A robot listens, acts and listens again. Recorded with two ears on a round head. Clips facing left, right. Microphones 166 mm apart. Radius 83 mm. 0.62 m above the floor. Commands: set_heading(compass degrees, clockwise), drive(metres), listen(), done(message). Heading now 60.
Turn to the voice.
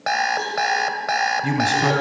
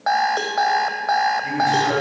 set_heading(330)
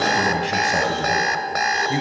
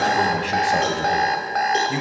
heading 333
done("Found it: a man speaking, straight ahead, over 4 m away.")